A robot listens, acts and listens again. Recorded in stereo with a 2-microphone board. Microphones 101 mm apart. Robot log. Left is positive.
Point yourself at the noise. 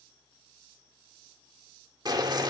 note: The boiling: about 40° right or 140° right.
cmd yaw -40
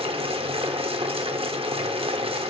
note: So it is at 95° right.
cmd yaw -95
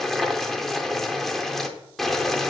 end: Found it: boiling, straight ahead, under 1 m away.